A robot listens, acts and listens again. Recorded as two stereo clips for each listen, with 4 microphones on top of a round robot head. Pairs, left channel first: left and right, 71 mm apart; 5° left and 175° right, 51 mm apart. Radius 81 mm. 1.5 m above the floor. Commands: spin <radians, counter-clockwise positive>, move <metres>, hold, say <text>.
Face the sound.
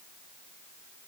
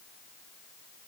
hold
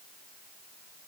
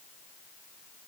hold
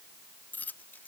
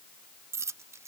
spin 2.79
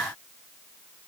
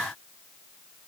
say Facing where the dropped coin came from. I can't hear it now.